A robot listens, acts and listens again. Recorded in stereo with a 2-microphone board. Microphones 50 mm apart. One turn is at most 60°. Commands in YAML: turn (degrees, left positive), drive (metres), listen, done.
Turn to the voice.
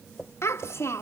turn: 60
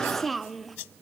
done: "Found it: a child speaking, straight ahead."